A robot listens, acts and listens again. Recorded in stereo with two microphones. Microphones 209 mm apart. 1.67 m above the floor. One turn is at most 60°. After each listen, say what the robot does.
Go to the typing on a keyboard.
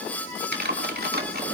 Turn 45° right.
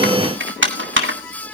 Turn 60° right.
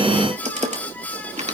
Turn 35° right.
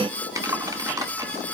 Turn 20° right.
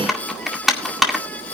Drive 1.0 m forward.
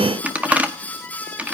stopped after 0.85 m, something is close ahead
Turn 10° right.
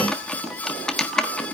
I am next to the typing on a keyboard.